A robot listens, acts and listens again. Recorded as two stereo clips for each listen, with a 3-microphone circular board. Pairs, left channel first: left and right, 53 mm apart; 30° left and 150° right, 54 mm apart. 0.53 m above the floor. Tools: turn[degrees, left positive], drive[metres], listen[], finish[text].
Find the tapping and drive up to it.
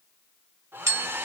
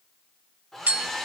Thought: The tapping: 95° right.
Action: turn[-95]
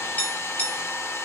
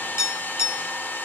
Thought: The tapping is now 35° left.
Action: turn[35]
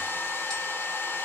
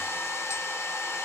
Action: listen[]
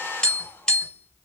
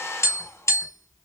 Thought: The tapping is now 15° left.
Action: turn[15]
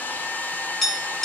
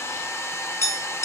Action: drive[1.0]
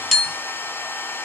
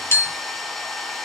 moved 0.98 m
Action: drive[1.0]
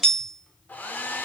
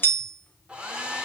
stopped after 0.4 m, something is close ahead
Action: finish[I am next to the tapping.]